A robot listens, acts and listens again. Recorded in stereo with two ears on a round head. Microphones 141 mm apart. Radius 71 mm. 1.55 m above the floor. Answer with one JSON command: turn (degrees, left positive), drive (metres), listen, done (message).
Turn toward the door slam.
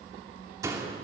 {"turn": -20}
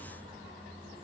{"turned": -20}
{"listen": true}
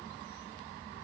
{"done": "I heard a door slam, but can't make it out now. It was about straight ahead or 140° right."}